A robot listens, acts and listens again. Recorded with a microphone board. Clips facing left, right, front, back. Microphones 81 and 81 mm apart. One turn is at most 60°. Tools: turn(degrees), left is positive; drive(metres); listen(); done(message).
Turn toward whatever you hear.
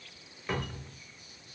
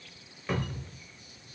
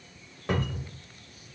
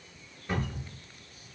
done("Found it: a cupboard door, straight ahead, 1 to 2 m away.")